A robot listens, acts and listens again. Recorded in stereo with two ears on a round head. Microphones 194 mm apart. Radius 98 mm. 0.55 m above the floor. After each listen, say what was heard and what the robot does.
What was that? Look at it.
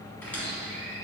Turn 30° left.
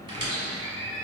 So it is at 25° right. Turn 25° right.
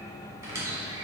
The squeak is now 15° right. Turn 15° right.
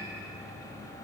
Keep listening.
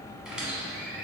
Found it: a squeak, straight ahead.